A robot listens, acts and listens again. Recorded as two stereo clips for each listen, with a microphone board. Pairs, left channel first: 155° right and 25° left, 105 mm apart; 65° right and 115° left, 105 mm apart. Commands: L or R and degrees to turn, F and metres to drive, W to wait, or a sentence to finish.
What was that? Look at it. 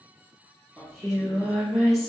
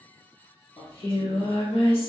R65
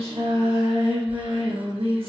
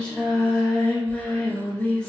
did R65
L10
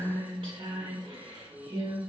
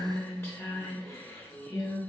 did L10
Facing the singing, under 1 m away.